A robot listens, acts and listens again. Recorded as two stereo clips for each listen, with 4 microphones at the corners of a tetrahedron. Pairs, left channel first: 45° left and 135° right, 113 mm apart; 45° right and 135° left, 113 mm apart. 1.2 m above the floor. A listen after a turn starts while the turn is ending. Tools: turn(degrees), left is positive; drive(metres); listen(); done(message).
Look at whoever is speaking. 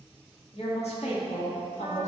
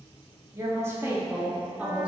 turn(degrees=55)
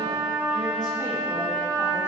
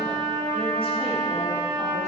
listen()
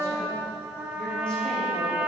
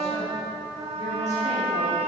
listen()
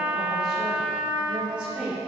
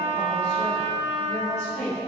turn(degrees=-55)
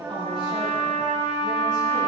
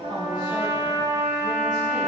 listen()
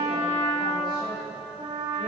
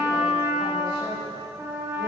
listen()
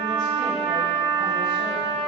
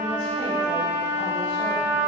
done("I heard a woman speaking from this way, but can't make it out now.")